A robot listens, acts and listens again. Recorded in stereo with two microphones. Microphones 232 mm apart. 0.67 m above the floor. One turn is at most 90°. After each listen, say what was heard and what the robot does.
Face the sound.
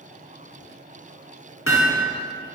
The hammering: about 65° left or 115° left. Turn 65° left.
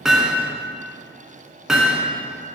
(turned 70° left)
Found it: hammering, straight ahead, 2 to 4 m away.